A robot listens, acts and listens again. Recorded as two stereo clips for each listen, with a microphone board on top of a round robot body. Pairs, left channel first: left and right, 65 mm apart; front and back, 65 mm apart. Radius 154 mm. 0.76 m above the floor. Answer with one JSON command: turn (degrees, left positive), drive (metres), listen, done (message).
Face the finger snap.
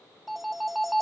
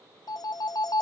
{"listen": true}
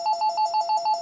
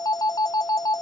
{"listen": true}
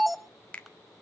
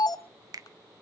{"turn": 160}
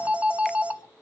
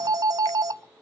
{"listen": true}
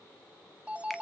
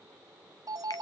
{"listen": true}
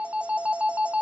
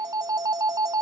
{"done": "I heard a finger snap from this way, but can't make it out now."}